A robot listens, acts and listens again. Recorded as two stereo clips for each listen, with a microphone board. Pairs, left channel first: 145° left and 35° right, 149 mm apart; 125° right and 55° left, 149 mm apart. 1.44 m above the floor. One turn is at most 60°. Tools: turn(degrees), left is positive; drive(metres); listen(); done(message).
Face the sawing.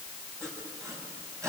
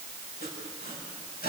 turn(degrees=-60)
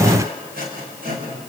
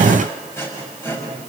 turn(degrees=-50)
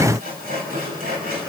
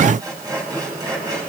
turn(degrees=-10)
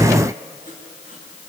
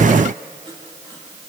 done("Facing the sawing.")